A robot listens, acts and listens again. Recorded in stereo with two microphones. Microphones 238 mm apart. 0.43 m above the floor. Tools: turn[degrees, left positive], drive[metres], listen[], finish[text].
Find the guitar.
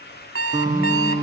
Thought: The guitar: about 30° right or 150° right.
Action: turn[-30]
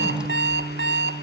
Thought: So it is at 120° right.
Action: turn[-120]
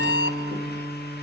Thought: The guitar is now 15° left.
Action: turn[15]
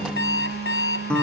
Action: finish[Facing the guitar, over 4 m away.]